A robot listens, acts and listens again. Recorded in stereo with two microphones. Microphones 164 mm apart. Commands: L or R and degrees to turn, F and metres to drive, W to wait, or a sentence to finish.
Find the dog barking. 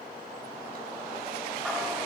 W
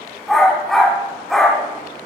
L30
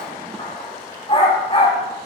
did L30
L145
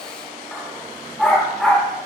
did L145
Found it: a dog barking, straight ahead, over 4 m away.